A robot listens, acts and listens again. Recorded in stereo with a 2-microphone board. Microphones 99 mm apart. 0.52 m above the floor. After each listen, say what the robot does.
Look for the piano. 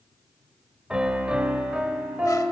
Turn 30° right.
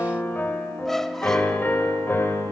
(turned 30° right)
Turn 25° left.
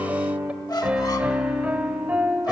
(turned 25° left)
Turn 15° right.
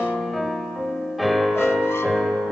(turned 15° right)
Found it: a piano, straight ahead.